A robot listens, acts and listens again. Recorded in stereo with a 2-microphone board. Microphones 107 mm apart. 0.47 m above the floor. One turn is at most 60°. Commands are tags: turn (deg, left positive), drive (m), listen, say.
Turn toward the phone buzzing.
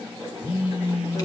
<turn deg="60"/>
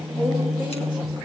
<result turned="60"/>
<say>Facing the phone buzzing.</say>